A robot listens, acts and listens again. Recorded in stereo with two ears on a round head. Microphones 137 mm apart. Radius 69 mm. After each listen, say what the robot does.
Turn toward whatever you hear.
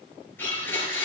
Turn 30° left.
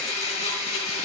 Turn 135° left.
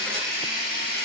Turn 65° left.
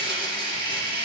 Turn 30° left.
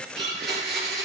Facing the blender, over 4 m away.